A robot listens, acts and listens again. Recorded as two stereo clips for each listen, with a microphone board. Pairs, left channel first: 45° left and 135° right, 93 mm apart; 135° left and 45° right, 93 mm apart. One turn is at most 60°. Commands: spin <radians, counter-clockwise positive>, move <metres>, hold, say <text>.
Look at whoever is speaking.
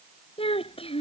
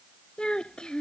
spin 0.96
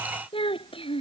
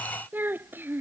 spin 0.44
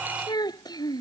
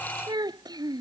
say Facing the child speaking.